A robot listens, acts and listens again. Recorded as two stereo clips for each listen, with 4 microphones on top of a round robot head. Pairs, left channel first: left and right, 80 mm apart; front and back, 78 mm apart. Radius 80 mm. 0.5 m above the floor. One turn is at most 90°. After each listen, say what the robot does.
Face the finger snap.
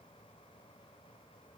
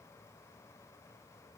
Keep listening.
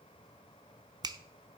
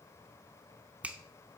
Turn 90° right.
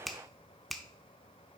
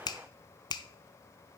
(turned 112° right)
Found it: a finger snap, straight ahead, under 1 m away.